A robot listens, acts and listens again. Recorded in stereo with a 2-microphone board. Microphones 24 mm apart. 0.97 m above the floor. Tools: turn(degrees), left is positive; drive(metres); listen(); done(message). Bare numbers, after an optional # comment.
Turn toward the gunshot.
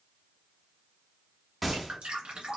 turn(-30)
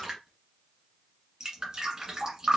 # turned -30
listen()
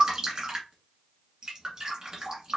done("I heard a gunshot, but can't make it out now. It was about 25° left or 145° right.")